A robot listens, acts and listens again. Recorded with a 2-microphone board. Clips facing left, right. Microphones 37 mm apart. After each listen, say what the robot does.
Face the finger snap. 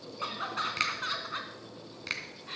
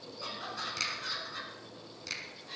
Turn 40° left.
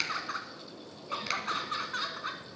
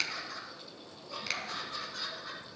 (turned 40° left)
Found it: a finger snap, straight ahead, 2 to 4 m away.